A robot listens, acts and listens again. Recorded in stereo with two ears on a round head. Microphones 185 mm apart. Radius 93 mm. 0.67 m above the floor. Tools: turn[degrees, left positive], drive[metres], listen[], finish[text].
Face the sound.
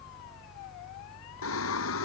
Thought: The singing: about 70° left or 110° left.
Action: turn[70]
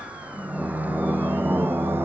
Thought: So it is at 10° right.
Action: turn[-10]
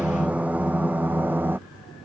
Thought: The singing is now 10° right.
Action: turn[-10]
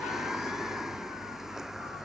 Action: finish[Found it: singing, straight ahead.]